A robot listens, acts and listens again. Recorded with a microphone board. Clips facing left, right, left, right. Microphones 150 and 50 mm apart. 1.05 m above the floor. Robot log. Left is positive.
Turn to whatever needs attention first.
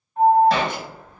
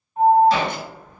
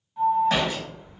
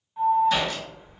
cmd yaw -30
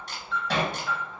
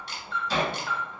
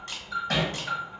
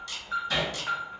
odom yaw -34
note: So it is at 130° right.
cmd yaw -130
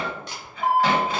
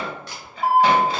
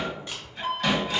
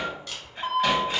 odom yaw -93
note: The alarm is now 35° right.
cmd yaw -35
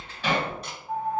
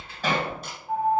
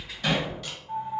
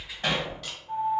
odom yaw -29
note: The alarm is now 10° right.
cmd yaw -10
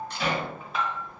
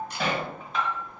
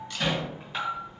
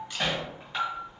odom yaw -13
end: Found it: an alarm, straight ahead, under 1 m away.